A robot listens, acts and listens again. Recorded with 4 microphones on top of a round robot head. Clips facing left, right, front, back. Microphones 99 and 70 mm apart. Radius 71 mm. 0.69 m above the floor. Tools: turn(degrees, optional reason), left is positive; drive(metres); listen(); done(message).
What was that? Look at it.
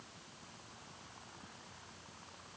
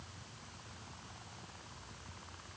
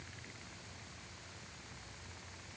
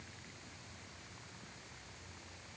listen()
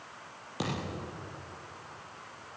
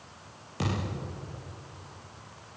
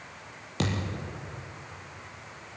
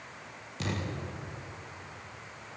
turn(degrees=15, reason="The thud: 15° left.")
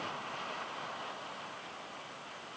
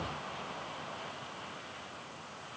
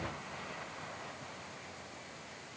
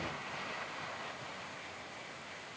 done("I heard a thud from this way, but can't make it out now.")